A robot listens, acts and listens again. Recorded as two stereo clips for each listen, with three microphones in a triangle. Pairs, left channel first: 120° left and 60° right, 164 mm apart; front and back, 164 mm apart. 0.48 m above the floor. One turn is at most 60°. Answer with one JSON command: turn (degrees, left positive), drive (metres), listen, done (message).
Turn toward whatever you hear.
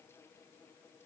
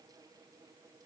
{"listen": true}
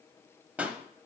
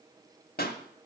{"turn": 20}
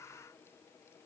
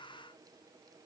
{"done": "I heard a pop from this way, but can't make it out now."}